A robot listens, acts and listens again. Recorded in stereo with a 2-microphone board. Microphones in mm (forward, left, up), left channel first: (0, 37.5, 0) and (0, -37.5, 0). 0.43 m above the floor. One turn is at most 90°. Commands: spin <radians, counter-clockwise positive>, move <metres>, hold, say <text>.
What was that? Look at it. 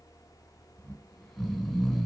spin 0.52
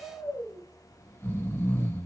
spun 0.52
spin 1.57
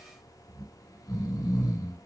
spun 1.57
spin 0.87
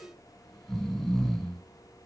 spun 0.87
say Facing the snoring, 2 to 4 m away.